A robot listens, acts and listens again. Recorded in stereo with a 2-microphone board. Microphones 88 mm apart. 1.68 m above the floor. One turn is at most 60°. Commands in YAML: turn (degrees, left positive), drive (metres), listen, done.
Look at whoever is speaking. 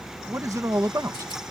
turn: -40
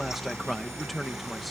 done: "Found it: a man speaking, straight ahead."